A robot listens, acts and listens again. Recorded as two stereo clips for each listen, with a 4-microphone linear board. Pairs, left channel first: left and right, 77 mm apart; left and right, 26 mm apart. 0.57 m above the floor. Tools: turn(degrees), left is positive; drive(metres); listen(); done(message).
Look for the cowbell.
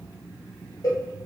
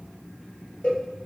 turn(degrees=50)
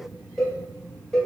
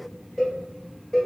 done("Facing the cowbell.")